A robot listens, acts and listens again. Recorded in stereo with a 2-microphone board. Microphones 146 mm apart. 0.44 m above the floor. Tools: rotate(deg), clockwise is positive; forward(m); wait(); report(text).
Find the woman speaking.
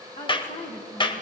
rotate(-75)
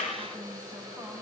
rotate(-10)
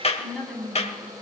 report("Found it: a woman speaking, straight ahead, 2 to 4 m away.")